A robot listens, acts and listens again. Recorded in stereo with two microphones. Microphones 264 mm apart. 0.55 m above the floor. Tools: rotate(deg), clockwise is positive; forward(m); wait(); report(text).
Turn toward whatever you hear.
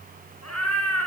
rotate(-90)
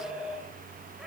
report("Found it: a cat meowing, straight ahead, 2 to 4 m away.")